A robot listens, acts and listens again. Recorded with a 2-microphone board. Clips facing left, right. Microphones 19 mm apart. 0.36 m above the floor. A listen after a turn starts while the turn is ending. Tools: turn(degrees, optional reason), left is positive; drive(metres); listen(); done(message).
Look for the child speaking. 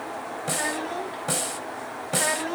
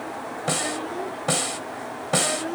turn(degrees=60, reason="The child speaking: about 60° left or 120° left.")
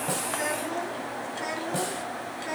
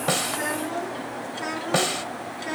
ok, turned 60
turn(degrees=-10, reason="So it is at 10° right.")
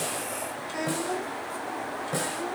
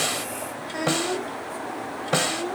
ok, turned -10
turn(degrees=-10, reason="The child speaking is now 10° right.")
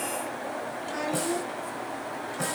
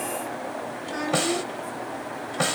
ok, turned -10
done("Facing the child speaking, 2 to 4 m away.")